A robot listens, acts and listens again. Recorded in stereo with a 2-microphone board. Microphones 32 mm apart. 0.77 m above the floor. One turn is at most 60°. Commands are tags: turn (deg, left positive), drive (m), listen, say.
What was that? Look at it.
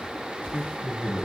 <turn deg="45"/>
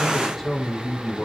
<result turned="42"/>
<say>Found it: a man speaking, straight ahead.</say>